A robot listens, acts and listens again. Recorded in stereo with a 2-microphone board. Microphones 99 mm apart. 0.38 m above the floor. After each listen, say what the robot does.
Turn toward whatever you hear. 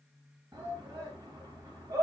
Turn 35° right.
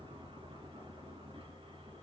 Keep listening.
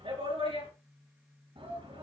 Turn 110° right.
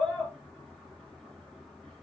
Facing the shout, over 4 m away.